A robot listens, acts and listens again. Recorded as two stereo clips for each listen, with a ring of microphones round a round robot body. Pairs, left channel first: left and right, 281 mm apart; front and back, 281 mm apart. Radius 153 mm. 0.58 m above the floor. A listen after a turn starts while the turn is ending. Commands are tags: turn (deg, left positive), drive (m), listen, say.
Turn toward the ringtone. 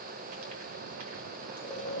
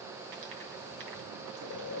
<listen/>
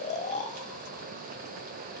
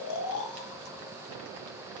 <listen/>
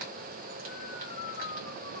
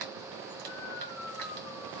<say>I can't make out a ringtone, only snoring.</say>